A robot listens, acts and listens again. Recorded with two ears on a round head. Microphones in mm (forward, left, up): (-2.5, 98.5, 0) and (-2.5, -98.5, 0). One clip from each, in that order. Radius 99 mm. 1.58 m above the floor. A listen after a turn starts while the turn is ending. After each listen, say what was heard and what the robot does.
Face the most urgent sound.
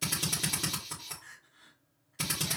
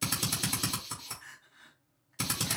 The crying: about 55° right or 125° right. Turn 55° right.
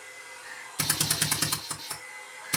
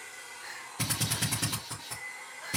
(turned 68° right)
Keep listening.
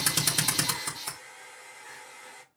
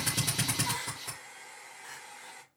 Keep listening.
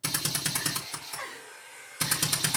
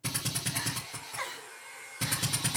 So it is at 35° right. Turn 35° right.
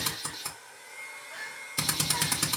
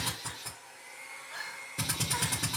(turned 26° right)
The crying is now 10° right. Turn 10° right.
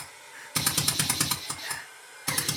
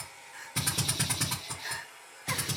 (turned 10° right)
Facing the crying, 2 to 4 m away.